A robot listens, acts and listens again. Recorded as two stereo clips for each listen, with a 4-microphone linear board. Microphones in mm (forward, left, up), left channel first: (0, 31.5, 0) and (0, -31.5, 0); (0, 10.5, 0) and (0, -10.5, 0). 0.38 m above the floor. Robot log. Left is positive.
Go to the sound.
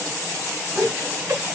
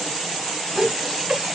note: The laughter: about 65° right or 115° right.
cmd yaw -65
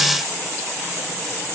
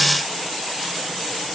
cmd idle
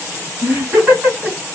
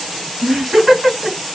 note: So it is at 25° right.
cmd yaw -25
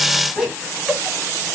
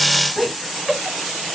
cmd fwd 1.0
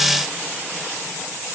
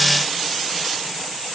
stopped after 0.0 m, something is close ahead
cmd idle
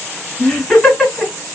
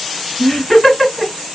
note: The laughter is now 10° left.
cmd yaw +10
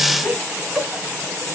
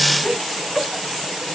end: Blocked. The laughter is further on, straight ahead.